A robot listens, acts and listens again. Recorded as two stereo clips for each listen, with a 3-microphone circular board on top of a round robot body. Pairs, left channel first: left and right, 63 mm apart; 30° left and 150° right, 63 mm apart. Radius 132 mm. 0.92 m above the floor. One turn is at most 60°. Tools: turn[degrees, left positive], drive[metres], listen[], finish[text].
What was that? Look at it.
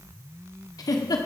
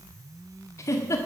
Thought: The giggle: 75° left.
Action: turn[60]
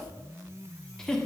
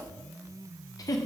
Thought: The giggle is now 10° left.
Action: turn[10]
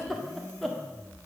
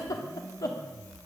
Action: finish[Found it: a giggle, straight ahead.]